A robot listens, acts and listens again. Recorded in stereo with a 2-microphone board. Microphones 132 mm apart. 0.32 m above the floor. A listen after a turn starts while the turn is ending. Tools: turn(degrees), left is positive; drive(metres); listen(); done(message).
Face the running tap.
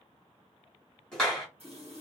turn(degrees=-60)
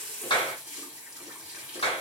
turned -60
turn(degrees=-10)
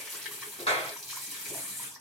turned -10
done("Found it: a running tap, straight ahead.")